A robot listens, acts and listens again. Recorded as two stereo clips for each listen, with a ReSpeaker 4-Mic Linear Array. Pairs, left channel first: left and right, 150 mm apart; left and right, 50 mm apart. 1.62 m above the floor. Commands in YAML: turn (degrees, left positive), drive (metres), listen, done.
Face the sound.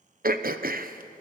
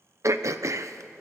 turn: -90
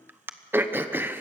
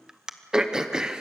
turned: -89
turn: -15
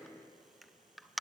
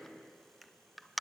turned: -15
done: "Found it: throat clearing, straight ahead."